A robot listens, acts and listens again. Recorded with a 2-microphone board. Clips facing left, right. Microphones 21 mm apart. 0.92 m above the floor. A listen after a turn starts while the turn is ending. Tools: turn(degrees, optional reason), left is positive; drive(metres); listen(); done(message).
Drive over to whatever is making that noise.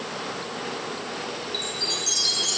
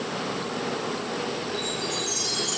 turn(degrees=65, reason="The chime: about 65° left or 115° left.")
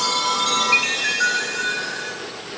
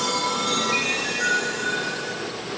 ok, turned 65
turn(degrees=55, reason="So it is at 55° left.")
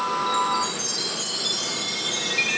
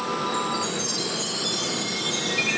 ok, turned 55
turn(degrees=10, reason="The chime is now 10° left.")
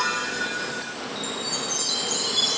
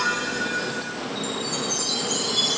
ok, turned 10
drive(metres=1.0)
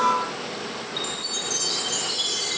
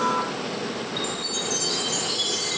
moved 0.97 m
drive(metres=1.0)
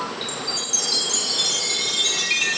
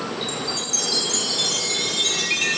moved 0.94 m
turn(degrees=10, reason="The chime is now 10° left.")
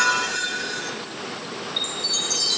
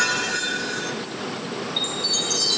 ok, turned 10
drive(metres=1.0)
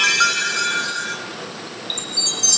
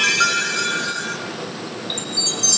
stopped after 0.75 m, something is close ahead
turn(degrees=10, reason="The chime is now 10° left.")
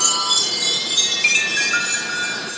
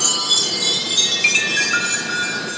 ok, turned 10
done("I am next to the chime.")